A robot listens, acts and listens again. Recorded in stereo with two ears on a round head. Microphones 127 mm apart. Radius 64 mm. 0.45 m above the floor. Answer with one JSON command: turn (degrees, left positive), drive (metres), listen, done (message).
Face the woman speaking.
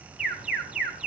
{"listen": true}
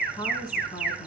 {"turn": 35}
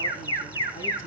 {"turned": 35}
{"listen": true}
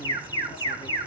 {"listen": true}
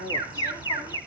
{"turn": 125}
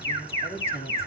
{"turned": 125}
{"turn": 20}
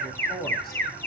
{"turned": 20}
{"done": "Found it: a woman speaking, straight ahead, 2 to 4 m away."}